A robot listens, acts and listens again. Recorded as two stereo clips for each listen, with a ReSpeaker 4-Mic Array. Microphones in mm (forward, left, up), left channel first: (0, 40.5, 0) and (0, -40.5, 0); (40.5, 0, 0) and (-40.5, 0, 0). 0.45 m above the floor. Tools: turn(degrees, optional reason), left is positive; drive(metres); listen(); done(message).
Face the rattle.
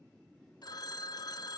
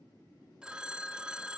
listen()
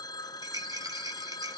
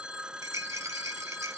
turn(degrees=-130, reason="The rattle: 130° right.")
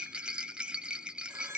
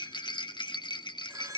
turn(degrees=-15, reason="The rattle is now 15° right.")
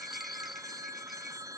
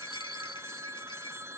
listen()
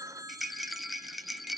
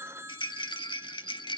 done("Facing the rattle, 1 to 2 m away.")